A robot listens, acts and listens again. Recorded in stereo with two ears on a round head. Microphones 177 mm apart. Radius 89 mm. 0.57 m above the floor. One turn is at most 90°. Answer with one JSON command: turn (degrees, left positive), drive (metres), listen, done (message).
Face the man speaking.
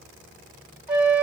{"listen": true}
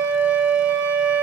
{"listen": true}
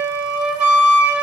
{"done": "I can't make out a man speaking to turn to."}